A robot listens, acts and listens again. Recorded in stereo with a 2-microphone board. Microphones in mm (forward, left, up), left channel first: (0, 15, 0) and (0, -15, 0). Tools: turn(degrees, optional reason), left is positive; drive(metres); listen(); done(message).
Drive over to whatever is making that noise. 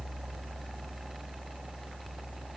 listen()
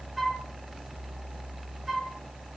turn(degrees=30)
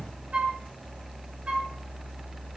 turn(degrees=-35, reason="So it is at 35° right.")
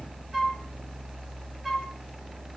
drive(metres=1.0)
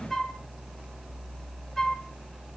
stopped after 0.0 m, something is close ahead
turn(degrees=10, reason="The flute is now 10° left.")
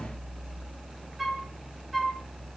done("Blocked. The flute is further on, straight ahead.")